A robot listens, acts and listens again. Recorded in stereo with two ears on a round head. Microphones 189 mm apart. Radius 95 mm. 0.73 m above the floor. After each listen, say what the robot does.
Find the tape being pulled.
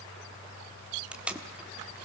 Turn 30° right.
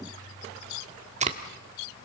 Turn 145° right.
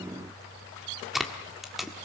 Found it: tape being pulled, straight ahead, 1 to 2 m away.